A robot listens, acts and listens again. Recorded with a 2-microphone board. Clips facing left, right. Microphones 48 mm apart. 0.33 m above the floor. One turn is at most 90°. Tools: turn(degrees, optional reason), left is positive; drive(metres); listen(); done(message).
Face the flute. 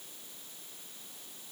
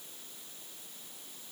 listen()
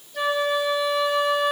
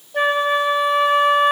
turn(degrees=-45, reason="The flute: about 45° right or 135° right.")
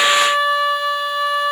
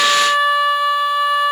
done("Found it: a flute, straight ahead.")